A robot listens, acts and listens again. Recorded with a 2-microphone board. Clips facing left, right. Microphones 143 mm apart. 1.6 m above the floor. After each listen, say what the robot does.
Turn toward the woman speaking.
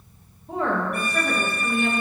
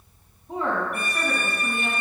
Turn 75° left.
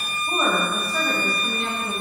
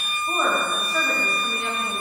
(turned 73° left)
Facing the woman speaking, 2 to 4 m away.